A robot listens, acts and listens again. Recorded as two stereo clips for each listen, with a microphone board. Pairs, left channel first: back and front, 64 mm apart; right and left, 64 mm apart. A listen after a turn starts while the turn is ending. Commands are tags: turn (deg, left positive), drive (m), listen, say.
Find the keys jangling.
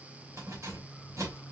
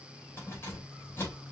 <turn deg="-35"/>
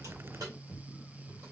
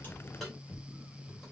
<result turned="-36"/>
<say>Found it: keys jangling, straight ahead.</say>